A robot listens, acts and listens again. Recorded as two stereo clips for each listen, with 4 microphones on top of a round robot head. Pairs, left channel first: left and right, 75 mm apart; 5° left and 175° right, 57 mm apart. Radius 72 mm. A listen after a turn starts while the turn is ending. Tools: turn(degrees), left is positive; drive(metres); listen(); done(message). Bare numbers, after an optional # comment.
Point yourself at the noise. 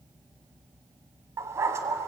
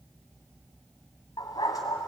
# The dog barking: 35° right.
turn(-35)
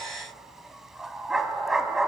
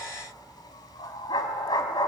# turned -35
done("Found it: a dog barking, straight ahead.")